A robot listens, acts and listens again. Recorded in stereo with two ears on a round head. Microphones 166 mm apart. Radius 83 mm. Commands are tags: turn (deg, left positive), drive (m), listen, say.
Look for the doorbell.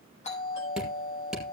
<turn deg="35"/>
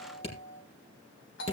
<turn deg="110"/>
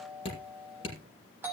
<turn deg="-10"/>
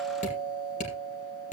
<say>Found it: a doorbell, straight ahead.</say>